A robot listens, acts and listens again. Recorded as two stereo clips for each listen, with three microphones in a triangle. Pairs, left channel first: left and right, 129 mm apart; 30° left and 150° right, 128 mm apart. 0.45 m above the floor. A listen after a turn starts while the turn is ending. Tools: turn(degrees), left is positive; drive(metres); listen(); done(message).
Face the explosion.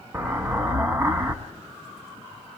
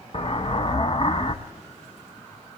turn(degrees=-15)
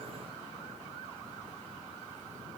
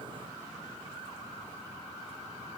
done("Facing where the explosion came from. I can't hear it now.")